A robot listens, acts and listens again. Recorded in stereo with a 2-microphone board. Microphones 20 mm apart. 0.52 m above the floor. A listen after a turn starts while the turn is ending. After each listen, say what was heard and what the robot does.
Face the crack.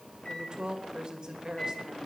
Keep listening.
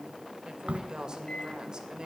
The crack: about 75° right or 105° right. Turn 75° right.
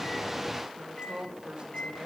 Keep listening.
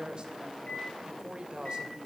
I heard a crack, but can't make it out now. It was about straight ahead or 30° right.